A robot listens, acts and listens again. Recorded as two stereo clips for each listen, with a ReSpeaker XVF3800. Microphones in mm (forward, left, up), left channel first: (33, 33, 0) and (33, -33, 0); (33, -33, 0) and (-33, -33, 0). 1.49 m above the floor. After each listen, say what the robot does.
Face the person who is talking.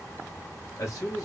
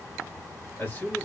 Turn 60° left.
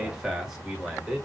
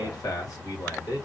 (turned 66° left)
Turn 10° right.
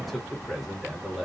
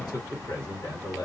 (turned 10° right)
Found it: a man speaking, straight ahead.